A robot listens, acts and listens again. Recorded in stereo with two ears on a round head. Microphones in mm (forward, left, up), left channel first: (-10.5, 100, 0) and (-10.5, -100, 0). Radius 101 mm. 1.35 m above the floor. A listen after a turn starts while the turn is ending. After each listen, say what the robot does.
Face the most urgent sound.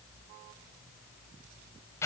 Keep listening.
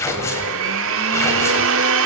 Keep listening.
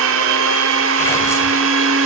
I can't make out anything urgent, only tearing paper and a blender.